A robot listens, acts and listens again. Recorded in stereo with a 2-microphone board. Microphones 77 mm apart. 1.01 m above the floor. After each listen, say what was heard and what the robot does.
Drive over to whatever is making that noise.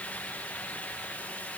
Keep listening.
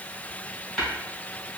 Turn 30° left.
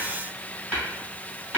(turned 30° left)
So it is at 30° right. Turn 30° right.
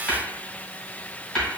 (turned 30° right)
Drive 1.0 m forward.
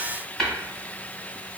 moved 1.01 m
Drive 1.0 m forward.
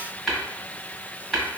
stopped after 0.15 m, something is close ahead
Arrived at the tapping, straight ahead.